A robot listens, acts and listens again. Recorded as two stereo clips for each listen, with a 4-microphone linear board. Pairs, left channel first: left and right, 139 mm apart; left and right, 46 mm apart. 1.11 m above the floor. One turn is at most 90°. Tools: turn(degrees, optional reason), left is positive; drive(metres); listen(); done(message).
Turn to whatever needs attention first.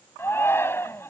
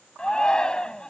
turn(degrees=15, reason="The shout: about 15° left or 165° left.")
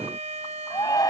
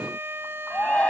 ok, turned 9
turn(degrees=25, reason="The shout: about 25° left or 155° left.")
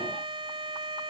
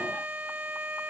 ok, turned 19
listen()
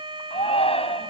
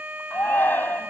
turn(degrees=90, reason="So it is at 135° left.")
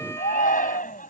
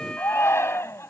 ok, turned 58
turn(degrees=75, reason="The shout is now 75° left.")
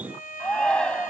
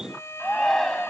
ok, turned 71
done("Facing the shout.")